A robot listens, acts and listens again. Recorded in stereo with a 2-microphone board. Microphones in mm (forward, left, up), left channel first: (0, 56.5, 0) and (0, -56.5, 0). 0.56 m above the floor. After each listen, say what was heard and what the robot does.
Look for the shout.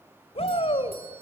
The shout: about 65° left or 115° left. Turn 65° left.
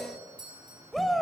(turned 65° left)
Facing the shout, 2 to 4 m away.